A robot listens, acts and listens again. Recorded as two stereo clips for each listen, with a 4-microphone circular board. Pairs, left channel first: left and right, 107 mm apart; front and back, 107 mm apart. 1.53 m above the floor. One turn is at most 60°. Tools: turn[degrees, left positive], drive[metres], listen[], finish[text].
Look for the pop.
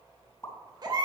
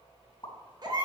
Thought: The pop: 35° left.
Action: turn[35]
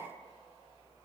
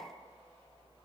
Action: finish[I heard a pop from this way, but can't make it out now.]